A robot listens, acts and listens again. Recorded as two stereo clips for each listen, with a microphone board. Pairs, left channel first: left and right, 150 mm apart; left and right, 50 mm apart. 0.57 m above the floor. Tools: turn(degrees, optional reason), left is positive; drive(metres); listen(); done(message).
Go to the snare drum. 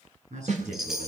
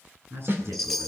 turn(degrees=-55, reason="The snare drum: about 55° right or 125° right.")
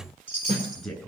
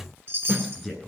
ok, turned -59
turn(degrees=-50, reason="So it is at 50° right.")
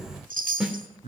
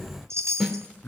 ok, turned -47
drive(metres=1.0)
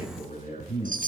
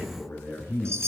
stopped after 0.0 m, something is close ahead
listen()
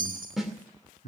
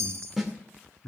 done("Something is in my way. I am facing the snare drum but have not reached it.")